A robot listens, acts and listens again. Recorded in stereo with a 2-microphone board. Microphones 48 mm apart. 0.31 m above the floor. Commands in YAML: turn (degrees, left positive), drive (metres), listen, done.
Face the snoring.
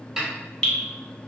listen: true
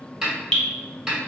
listen: true
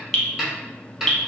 done: "I can't make out snoring, only a snare drum and dripping."